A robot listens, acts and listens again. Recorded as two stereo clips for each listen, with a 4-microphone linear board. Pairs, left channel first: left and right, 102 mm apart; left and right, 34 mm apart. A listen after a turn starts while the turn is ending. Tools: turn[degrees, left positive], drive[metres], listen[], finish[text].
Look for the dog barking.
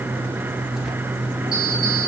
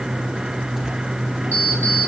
Action: listen[]
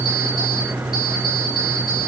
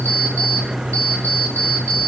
Action: listen[]
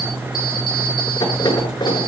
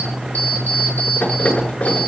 Action: finish[I can't make out a dog barking, only an alarm clock.]